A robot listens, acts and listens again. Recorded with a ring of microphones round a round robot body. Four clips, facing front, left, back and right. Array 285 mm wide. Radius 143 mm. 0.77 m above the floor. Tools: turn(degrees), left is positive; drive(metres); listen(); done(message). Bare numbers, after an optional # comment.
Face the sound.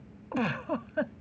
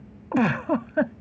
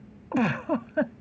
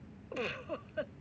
# The giggle: 110° left.
turn(110)
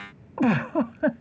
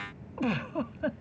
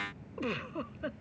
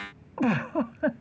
# The giggle is now 20° right.
turn(-20)
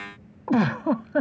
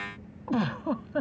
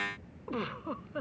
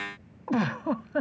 done("Found it: a giggle, straight ahead.")